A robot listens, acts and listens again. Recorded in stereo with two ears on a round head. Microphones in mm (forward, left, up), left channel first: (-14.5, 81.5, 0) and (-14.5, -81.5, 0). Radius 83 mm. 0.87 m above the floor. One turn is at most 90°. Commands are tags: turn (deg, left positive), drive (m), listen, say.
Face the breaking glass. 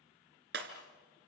<turn deg="-60"/>
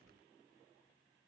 <listen/>
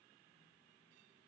<say>I heard breaking glass, but can't make it out now. It was about straight ahead or 60° right.</say>